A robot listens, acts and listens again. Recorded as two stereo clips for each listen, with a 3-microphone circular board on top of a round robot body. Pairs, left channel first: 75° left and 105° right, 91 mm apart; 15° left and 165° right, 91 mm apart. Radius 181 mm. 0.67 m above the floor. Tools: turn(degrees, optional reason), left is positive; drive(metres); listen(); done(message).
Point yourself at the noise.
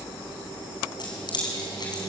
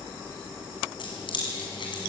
turn(degrees=40, reason="The keys jangling: 40° left.")
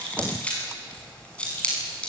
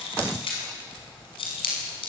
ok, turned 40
done("Found it: keys jangling, straight ahead.")